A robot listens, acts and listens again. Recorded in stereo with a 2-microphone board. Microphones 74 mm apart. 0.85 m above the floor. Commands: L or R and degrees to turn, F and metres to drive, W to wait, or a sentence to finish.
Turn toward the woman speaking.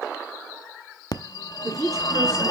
R45
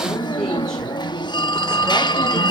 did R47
W
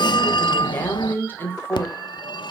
L30
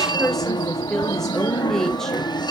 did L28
Found it: a woman speaking, straight ahead, 2 to 4 m away.